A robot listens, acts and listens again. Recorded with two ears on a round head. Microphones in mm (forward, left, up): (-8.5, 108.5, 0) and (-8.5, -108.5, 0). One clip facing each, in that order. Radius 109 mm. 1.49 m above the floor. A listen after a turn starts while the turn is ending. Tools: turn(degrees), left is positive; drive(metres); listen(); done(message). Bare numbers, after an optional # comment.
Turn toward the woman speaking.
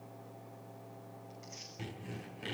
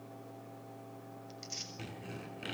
listen()
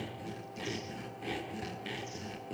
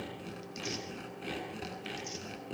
listen()
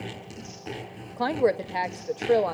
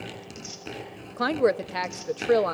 turn(-30)
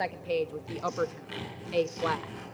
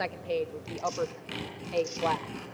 # So it is at 20° left.
turn(20)
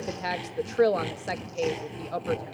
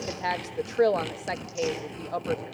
done("Facing the woman speaking, 1 to 2 m away.")